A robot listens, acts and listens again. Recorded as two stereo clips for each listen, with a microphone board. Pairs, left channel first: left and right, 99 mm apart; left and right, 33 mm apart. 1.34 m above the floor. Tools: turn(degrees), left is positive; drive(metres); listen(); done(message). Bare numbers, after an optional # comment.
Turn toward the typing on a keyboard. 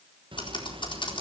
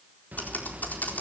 # The typing on a keyboard: about 55° left or 125° left.
turn(55)
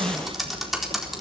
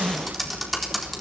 done("Facing the typing on a keyboard, 2 to 4 m away.")